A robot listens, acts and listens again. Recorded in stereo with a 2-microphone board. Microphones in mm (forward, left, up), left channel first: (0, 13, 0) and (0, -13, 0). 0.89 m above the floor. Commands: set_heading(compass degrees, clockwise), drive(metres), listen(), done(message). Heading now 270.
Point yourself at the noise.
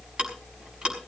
set_heading(310)
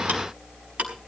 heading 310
set_heading(50)
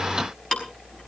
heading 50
set_heading(35)
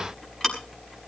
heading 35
set_heading(25)
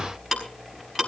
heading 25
done("Facing the ticking, over 4 m away.")